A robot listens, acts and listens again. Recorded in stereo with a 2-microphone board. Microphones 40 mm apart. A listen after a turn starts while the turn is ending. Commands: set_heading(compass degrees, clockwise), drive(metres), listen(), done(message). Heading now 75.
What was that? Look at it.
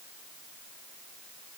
listen()
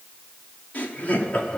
set_heading(40)
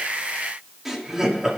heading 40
set_heading(55)
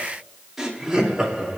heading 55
set_heading(75)
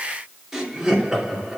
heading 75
set_heading(85)
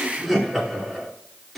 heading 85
done("Found it: laughter, straight ahead, 2 to 4 m away.")